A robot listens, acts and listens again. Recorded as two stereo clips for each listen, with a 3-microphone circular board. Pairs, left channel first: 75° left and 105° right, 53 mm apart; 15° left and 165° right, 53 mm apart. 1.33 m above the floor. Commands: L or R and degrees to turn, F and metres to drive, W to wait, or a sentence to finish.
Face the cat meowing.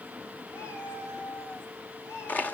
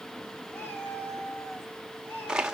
L65
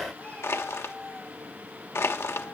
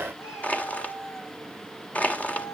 L10
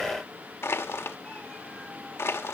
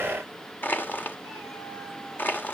W
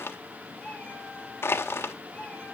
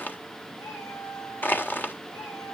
Facing the cat meowing.